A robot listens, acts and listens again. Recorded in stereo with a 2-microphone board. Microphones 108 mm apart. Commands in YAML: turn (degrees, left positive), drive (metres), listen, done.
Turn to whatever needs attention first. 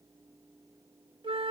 listen: true
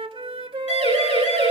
turn: 90
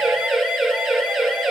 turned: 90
done: "Facing the siren."